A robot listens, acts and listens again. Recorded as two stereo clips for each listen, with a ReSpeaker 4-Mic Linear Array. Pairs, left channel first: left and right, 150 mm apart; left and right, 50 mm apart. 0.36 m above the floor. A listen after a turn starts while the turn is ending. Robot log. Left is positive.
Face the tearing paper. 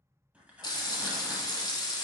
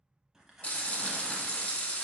cmd yaw -30
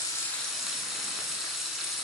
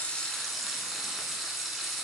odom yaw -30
cmd idle
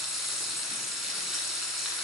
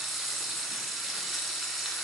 cmd idle
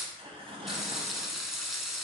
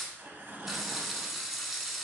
note: So it is at 140° right.
cmd yaw -140
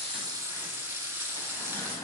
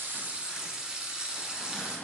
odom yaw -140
cmd idle
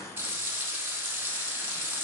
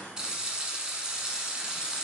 note: The tearing paper is now 20° left.
cmd yaw +20
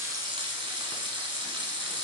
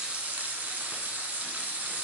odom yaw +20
cmd idle
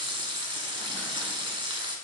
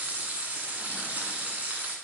cmd idle
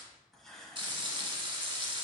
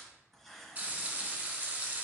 end: Facing the tearing paper.